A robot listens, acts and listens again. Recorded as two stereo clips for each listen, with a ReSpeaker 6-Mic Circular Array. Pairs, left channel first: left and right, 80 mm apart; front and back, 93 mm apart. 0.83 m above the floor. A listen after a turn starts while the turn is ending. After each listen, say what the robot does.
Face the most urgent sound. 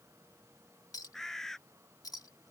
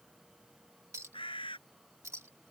Keep listening.
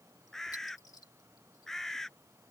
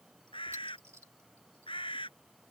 Keep listening.
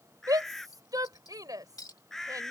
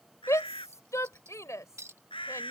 Turn 55° right.
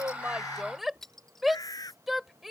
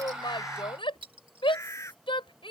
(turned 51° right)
Facing the shout.